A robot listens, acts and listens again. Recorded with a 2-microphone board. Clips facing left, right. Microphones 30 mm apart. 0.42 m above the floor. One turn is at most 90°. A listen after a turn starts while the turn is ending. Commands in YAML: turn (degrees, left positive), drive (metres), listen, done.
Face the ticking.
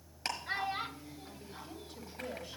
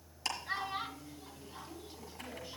turn: 50
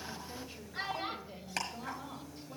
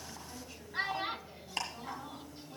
turn: 80
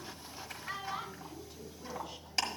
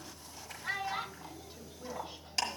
done: "Facing the ticking."